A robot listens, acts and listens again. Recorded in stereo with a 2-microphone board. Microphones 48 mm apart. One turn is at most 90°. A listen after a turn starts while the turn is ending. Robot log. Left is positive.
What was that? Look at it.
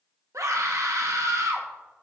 cmd yaw -90
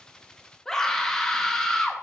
note: So it is at 10° left.
cmd yaw +10
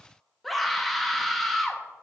end: Found it: a scream, straight ahead.